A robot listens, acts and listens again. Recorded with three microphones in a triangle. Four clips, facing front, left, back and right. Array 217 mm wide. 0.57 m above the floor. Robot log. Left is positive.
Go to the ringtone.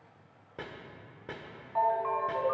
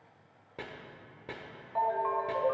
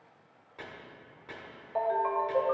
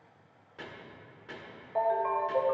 note: The ringtone: 150° right.
cmd yaw -150
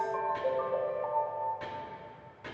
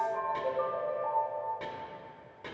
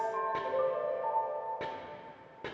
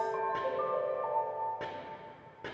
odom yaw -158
cmd fwd 1.0
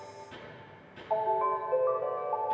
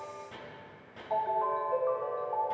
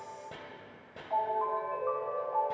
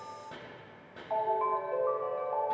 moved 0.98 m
note: The ringtone is now 10° left.
cmd yaw +10
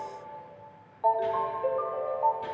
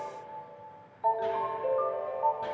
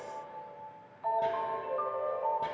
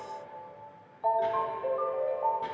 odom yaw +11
cmd fwd 1.0
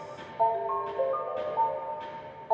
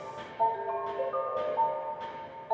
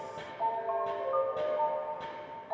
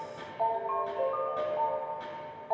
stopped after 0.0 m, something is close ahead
note: The ringtone is now 10° left.
cmd yaw +10
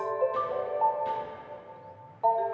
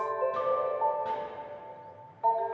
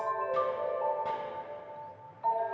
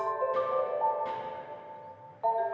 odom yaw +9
end: I am next to the ringtone.